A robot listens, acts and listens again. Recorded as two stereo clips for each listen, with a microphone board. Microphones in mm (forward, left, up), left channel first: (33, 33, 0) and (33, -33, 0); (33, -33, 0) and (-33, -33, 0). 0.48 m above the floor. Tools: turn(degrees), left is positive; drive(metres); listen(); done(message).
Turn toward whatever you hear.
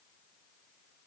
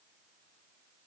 listen()
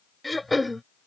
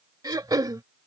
turn(degrees=180)
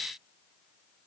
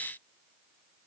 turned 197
turn(degrees=-15)
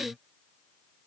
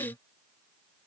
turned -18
done("Found it: throat clearing, straight ahead.")